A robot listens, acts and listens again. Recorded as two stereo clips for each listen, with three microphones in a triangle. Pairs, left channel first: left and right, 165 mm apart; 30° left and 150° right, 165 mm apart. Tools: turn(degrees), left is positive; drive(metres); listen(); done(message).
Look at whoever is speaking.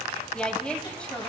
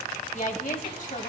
turn(degrees=10)
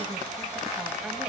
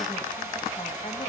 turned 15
listen()
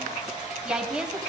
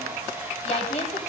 done("Facing the woman speaking, 1 to 2 m away.")